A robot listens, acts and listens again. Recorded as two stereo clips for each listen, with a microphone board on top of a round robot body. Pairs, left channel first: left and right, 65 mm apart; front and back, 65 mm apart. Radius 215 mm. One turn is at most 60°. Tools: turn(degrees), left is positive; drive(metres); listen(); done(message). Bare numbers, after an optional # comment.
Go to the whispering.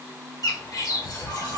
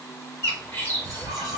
# The whispering: 100° left.
turn(60)
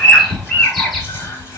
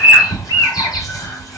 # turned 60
# The whispering is now 35° left.
turn(35)
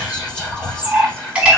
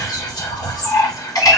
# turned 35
# The whispering is now 15° left.
turn(15)
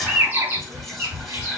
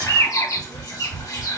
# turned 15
drive(1.0)
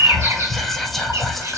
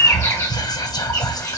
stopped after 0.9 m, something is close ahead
done("I am next to the whispering.")